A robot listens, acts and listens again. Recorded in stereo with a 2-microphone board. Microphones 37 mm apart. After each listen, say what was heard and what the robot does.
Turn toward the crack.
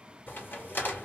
The crack: about 70° left or 110° left. Turn 70° left.
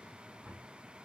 Keep listening.
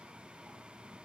I heard a crack, but can't make it out now. It was about straight ahead or 40° left.